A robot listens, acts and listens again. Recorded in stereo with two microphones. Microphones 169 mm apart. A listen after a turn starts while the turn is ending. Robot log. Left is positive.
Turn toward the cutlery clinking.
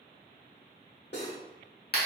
note: The cutlery clinking: about 70° left or 110° left.
cmd yaw +70
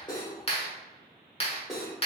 end: Found it: cutlery clinking, straight ahead.